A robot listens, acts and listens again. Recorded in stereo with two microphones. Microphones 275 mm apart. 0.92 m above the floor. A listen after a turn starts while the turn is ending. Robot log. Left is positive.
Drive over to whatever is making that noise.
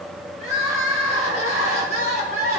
note: The crying: about 60° left or 120° left.
cmd yaw +60
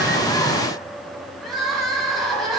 cmd fwd 1.0
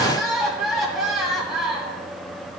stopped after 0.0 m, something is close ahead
end: Something is in my way. I am facing the crying but have not reached it.